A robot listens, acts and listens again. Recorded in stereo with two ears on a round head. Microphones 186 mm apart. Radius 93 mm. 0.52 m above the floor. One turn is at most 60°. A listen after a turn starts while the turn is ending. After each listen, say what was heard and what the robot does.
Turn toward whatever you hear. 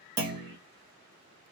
The clunk: about 55° right or 125° right. Turn 55° right.
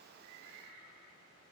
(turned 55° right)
Keep listening.
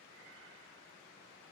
I heard a clunk, but can't make it out now. It was about straight ahead or 70° right.